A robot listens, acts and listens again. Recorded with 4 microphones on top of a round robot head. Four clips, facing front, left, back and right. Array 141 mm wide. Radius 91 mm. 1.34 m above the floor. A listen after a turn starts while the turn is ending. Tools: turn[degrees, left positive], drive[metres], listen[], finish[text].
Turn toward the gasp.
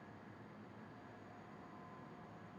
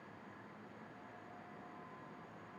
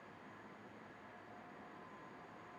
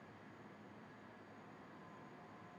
Action: listen[]
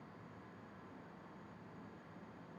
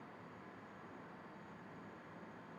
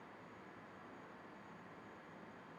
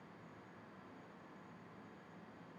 Action: listen[]
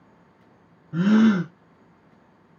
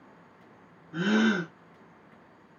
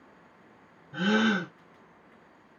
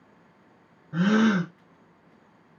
Thought: The gasp: 55° right.
Action: turn[-55]
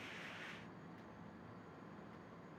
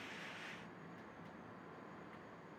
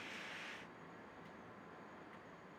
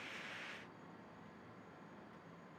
Action: finish[I heard a gasp from this way, but can't make it out now.]